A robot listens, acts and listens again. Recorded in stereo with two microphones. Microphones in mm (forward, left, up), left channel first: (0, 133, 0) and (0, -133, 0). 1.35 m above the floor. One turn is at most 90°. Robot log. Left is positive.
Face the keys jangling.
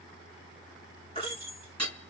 note: The keys jangling: about 60° right or 120° right.
cmd yaw -60
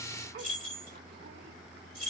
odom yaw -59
note: So it is at 55° right.
cmd yaw -55
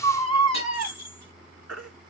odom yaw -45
note: The keys jangling is now 10° right.
cmd yaw -10
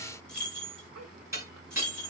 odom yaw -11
end: Facing the keys jangling.